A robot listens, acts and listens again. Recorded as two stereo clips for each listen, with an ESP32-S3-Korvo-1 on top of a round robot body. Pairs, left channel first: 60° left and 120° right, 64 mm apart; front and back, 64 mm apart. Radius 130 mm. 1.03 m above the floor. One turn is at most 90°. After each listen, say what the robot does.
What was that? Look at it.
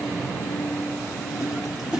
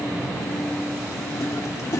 Turn 40° right.
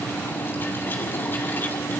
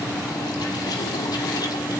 Keep listening.
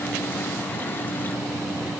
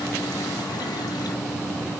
Keep listening.
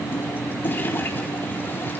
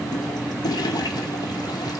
Facing the toilet flushing.